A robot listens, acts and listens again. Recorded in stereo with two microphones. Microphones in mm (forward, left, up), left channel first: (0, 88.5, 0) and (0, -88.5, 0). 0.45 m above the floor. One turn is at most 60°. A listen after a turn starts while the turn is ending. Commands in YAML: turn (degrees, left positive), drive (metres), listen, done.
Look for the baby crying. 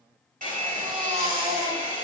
turn: -40
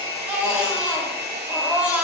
turn: -10
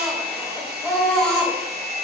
done: "Found it: a baby crying, straight ahead."